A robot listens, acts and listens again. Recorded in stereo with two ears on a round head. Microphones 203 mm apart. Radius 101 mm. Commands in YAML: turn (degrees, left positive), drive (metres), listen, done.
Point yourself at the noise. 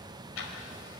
turn: 70
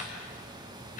turn: 40
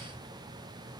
listen: true
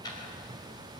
turn: 20
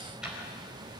done: "Found it: ticking, straight ahead."